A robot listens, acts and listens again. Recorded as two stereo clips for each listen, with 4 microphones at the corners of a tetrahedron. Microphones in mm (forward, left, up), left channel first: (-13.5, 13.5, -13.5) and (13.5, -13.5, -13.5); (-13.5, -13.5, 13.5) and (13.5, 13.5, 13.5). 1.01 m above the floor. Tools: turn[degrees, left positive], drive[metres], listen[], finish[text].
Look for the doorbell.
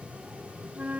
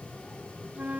Action: listen[]
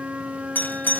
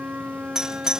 Thought: The doorbell: 115° left.
Action: turn[115]
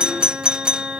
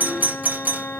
Thought: The doorbell is now 15° left.
Action: turn[15]
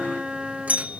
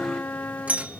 Action: finish[Facing the doorbell.]